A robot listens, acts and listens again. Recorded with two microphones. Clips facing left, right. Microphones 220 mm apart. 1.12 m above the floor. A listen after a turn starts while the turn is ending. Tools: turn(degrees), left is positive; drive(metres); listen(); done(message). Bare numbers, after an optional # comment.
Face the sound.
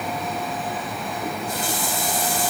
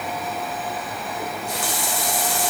turn(-90)
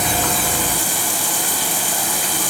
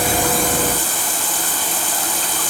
# So it is at 10° left.
turn(10)
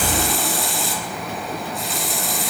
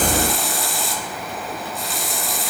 done("Found it: a running tap, straight ahead.")